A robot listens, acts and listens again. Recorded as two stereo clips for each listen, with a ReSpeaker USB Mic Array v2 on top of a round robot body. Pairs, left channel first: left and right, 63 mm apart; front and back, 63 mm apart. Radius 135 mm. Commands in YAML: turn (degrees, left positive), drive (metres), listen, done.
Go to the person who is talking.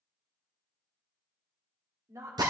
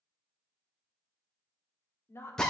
turn: -50
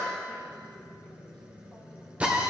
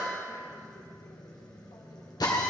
listen: true
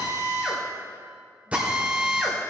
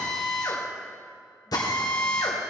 listen: true
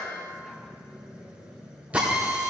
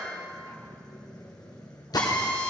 done: "Facing where the woman speaking came from. I can't hear it now. I did not reach it."